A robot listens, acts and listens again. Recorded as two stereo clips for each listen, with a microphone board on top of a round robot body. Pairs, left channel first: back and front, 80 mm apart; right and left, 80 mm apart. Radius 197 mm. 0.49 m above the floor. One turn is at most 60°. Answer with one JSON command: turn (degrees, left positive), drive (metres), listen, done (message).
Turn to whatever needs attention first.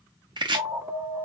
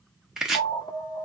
{"turn": -55}
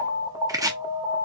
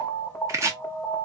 {"turn": -25}
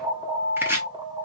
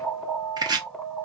{"done": "Facing the alarm, 1 to 2 m away."}